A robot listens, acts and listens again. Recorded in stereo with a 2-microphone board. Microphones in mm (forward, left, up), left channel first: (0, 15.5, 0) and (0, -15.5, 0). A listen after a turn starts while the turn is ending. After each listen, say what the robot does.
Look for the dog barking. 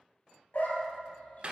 Turn 60° left.
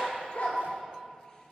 Turn 35° left.
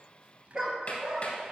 Turn 20° right.
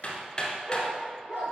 Turn 25° right.
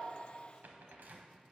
Keep listening.
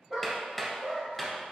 Found it: a dog barking, straight ahead.